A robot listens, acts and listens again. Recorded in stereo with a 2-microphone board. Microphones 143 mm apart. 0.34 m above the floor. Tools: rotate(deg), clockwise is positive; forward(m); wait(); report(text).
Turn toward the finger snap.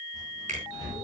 rotate(60)
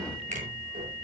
wait()
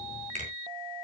rotate(60)
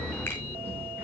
wait()
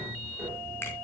wait()
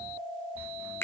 rotate(-20)
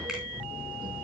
wait()
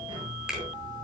report("Facing the finger snap.")